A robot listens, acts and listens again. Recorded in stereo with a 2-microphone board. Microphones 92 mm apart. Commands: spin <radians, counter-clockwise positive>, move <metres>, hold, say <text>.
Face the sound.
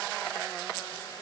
hold
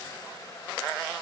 hold
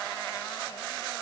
say I can't make out anything to turn to.